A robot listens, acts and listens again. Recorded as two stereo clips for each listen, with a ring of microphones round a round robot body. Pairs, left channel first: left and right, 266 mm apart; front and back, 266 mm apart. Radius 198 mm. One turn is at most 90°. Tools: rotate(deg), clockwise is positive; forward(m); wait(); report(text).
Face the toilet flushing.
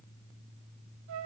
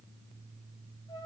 wait()
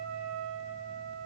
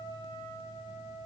wait()
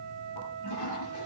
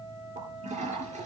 rotate(-90)
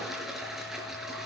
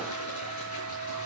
report("Facing the toilet flushing, over 4 m away.")